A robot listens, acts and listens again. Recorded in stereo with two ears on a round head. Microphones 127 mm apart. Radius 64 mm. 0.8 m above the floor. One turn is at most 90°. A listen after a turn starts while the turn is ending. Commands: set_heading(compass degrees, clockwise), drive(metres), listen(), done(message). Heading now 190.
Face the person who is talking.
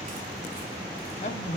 set_heading(140)
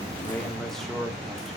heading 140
done("Facing the man speaking, 1 to 2 m away.")